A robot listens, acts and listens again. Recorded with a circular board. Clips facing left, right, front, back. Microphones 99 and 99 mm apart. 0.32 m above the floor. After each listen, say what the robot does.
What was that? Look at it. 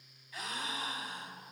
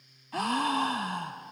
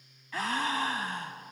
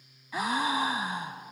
Turn 105° right.
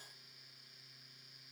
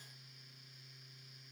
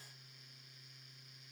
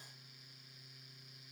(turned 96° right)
Turn 10° right.
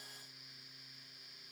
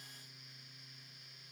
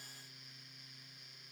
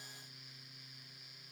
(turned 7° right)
I heard a gasp from this way, but can't make it out now.